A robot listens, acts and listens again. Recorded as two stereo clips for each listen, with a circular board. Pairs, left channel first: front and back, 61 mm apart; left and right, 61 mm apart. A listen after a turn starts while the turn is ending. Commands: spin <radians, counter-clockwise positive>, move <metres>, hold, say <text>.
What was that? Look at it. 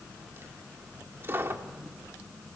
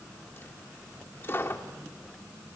spin 2.36
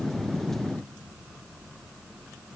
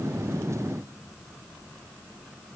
say Facing where the dropped coin came from. I can't hear it now.